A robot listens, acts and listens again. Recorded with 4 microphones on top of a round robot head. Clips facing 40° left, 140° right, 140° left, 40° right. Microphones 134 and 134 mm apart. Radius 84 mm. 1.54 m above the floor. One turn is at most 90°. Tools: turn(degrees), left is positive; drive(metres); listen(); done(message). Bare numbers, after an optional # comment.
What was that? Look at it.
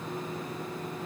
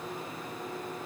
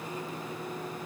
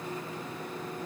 listen()
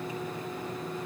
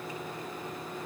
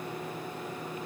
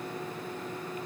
listen()
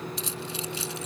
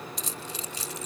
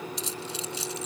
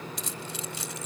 # The keys jangling: 85° right.
turn(-85)
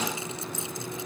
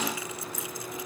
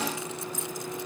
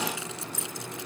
# The keys jangling is now 25° right.
turn(-25)
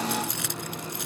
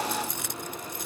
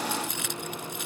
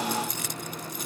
# The keys jangling is now 15° left.
turn(15)
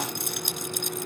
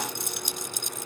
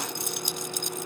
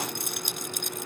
done("Found it: keys jangling, straight ahead.")